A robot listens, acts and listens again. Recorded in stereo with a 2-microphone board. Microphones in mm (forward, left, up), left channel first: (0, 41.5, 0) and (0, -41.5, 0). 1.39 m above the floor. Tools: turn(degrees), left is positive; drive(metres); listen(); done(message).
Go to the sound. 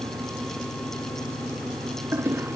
turn(degrees=-30)
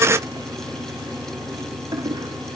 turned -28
turn(degrees=-125)
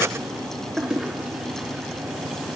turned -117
drive(metres=1.0)
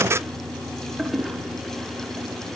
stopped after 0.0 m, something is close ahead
done("Blocked. The toilet flushing is further on, straight ahead.")